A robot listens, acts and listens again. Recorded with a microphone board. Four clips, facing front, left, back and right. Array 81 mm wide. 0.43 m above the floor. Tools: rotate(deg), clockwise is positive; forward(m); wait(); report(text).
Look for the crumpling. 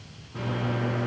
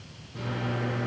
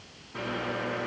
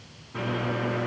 wait()
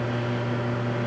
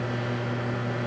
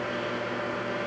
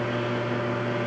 wait()
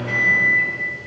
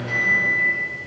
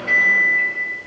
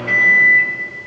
report("I can't make out crumpling to turn to.")